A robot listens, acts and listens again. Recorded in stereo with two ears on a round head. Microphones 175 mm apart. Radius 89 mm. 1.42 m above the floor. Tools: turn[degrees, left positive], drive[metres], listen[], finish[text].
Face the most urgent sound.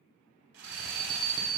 Thought: The alarm: about 65° right or 115° right.
Action: turn[-65]
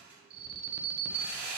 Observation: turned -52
Thought: So it is at 55° right.
Action: turn[-55]
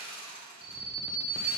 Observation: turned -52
Action: finish[Found it: an alarm, straight ahead, under 1 m away.]